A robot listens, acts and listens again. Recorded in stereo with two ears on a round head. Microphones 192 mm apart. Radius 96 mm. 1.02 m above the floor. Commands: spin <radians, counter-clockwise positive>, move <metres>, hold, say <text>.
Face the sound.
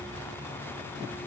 hold
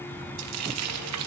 spin -1.57
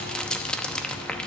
say Found it: frying, straight ahead.